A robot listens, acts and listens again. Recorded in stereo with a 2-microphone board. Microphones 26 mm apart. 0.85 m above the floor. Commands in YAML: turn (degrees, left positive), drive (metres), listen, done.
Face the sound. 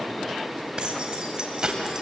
turn: -30
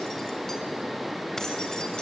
listen: true
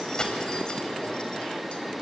turn: 30
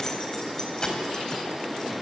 turn: 25
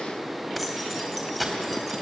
done: "Facing the keys jangling, 2 to 4 m away."